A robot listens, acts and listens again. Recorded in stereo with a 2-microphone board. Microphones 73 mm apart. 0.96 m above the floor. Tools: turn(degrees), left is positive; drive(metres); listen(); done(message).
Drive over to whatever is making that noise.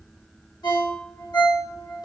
turn(degrees=90)
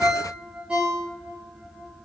turn(degrees=-15)
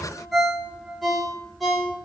drive(metres=1.0)
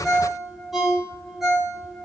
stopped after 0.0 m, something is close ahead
done("Something is in my way. I am facing the ringtone but have not reached it.")